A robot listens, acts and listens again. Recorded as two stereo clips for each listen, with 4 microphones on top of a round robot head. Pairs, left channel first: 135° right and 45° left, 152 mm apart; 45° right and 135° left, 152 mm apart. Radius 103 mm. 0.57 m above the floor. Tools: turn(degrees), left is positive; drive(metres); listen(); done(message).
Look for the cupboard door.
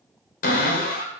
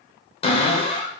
turn(degrees=-100)
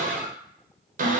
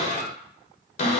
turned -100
done("Found it: a cupboard door, straight ahead.")